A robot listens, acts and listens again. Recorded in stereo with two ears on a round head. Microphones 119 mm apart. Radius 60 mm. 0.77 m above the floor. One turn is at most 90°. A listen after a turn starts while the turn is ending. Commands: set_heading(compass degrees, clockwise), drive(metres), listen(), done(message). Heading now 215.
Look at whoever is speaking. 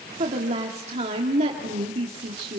set_heading(265)
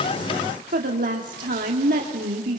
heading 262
set_heading(342)
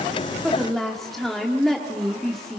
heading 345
done("Facing the woman speaking, 1 to 2 m away.")